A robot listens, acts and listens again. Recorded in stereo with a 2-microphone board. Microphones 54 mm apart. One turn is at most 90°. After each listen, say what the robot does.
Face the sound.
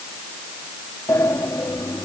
Turn 90° left.
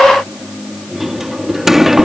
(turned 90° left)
Found it: a sliding door, straight ahead.